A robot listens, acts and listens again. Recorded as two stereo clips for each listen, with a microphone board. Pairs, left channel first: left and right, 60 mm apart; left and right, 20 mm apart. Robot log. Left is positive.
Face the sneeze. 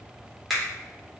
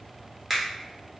cmd idle
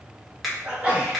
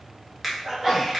note: The sneeze: about 20° right or 160° right.
cmd yaw -20
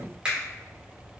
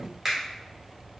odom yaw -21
cmd idle
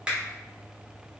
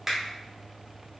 end: I heard a sneeze, but can't make it out now. It was about straight ahead or 140° right.